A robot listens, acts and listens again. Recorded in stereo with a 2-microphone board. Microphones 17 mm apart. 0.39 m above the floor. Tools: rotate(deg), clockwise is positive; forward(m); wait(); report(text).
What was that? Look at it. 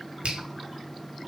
rotate(65)
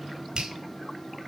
rotate(50)
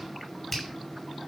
rotate(-10)
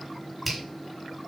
report("Found it: a finger snap, straight ahead.")